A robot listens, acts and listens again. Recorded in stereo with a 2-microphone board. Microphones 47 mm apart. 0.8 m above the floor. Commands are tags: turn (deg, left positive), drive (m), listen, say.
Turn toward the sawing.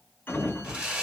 <turn deg="-20"/>
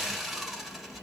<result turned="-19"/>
<say>Found it: sawing, straight ahead.</say>